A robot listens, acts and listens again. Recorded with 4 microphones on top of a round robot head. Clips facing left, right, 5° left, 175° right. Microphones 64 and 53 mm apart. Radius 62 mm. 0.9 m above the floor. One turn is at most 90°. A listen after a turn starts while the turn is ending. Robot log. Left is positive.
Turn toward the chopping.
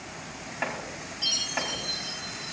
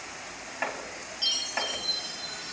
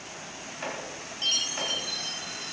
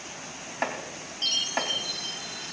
note: The chopping: straight behind.
cmd yaw +90
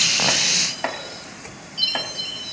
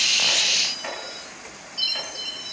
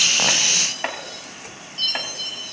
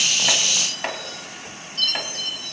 note: The chopping is now 85° left.
cmd yaw +85
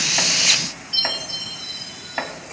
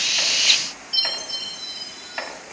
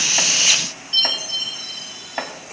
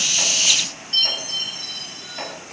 note: The chopping is now 25° left.
cmd yaw +25
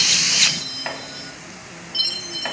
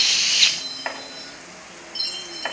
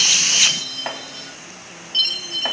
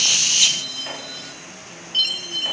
note: The chopping is now 15° right.
cmd yaw -15
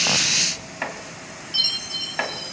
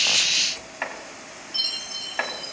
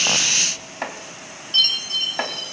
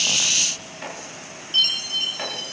end: Found it: chopping, straight ahead.